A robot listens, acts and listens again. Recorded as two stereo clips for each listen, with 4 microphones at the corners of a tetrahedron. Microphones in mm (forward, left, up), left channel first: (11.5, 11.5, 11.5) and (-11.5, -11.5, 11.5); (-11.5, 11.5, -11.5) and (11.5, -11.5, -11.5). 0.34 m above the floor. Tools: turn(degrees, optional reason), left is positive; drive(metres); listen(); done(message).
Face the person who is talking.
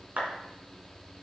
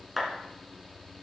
listen()
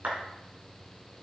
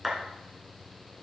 listen()
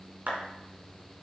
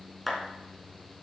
done("I can't make out anyone speaking to turn to.")